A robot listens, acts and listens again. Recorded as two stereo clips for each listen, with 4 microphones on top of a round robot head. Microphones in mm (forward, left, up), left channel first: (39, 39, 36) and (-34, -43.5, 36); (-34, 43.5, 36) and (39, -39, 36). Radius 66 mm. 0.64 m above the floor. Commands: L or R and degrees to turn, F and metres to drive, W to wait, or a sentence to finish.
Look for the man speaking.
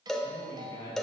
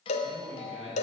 R10
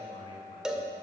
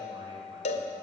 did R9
W
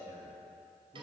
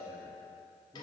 Found it: a man speaking, straight ahead, over 4 m away.